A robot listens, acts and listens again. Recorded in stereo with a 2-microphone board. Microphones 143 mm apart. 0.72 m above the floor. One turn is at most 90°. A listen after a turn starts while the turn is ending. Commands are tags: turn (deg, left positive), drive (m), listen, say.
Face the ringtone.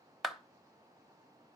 <listen/>
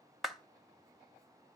<listen/>
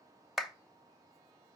<say>I can't make out a ringtone to turn to.</say>